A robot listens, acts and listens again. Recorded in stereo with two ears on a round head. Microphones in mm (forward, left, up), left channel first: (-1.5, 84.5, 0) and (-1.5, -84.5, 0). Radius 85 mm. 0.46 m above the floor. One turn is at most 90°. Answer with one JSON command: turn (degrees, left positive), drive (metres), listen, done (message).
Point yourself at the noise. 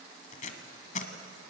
{"turn": 40}
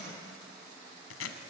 {"turn": 90}
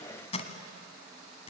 {"turn": 35}
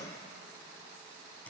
{"listen": true}
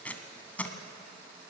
{"turn": 10}
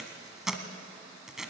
{"done": "Facing the tape being pulled, 1 to 2 m away."}